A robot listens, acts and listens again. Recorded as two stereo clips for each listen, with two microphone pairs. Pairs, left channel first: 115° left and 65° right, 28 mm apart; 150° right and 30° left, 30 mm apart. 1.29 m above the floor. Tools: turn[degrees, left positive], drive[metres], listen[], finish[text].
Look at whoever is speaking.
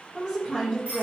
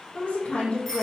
Thought: The woman speaking: 130° right.
Action: turn[-130]
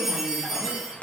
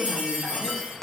Action: listen[]
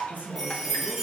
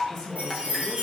Thought: The woman speaking is now 45° right.
Action: turn[-45]
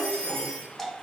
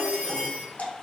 Thought: The woman speaking is now 15° left.
Action: turn[15]
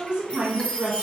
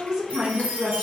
Action: finish[Found it: a woman speaking, straight ahead, 1 to 2 m away.]